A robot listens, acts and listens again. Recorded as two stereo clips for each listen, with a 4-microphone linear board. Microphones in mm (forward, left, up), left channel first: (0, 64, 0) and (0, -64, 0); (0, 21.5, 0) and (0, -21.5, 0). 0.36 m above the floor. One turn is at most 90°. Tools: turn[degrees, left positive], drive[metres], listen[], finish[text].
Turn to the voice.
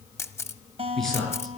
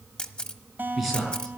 Action: turn[30]
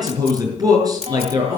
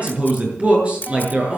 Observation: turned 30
Thought: So it is at 30° right.
Action: turn[-30]
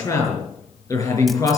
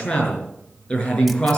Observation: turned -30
Thought: The man speaking is now 25° left.
Action: turn[25]
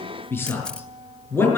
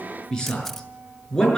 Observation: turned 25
Thought: The man speaking is now 20° left.
Action: turn[20]
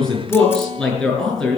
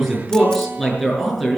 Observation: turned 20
Action: finish[Facing the man speaking, over 4 m away.]